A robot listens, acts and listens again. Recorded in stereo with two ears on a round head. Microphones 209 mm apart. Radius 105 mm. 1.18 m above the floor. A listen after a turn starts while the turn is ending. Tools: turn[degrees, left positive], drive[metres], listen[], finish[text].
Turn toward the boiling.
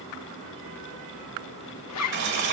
Thought: The boiling: about 50° right or 130° right.
Action: turn[-50]
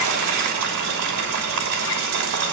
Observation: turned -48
Thought: So it is at 80° right.
Action: turn[-80]
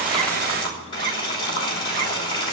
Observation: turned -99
Thought: The boiling is now 20° left.
Action: turn[20]
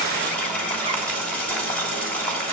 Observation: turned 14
Action: finish[Found it: boiling, straight ahead, 2 to 4 m away.]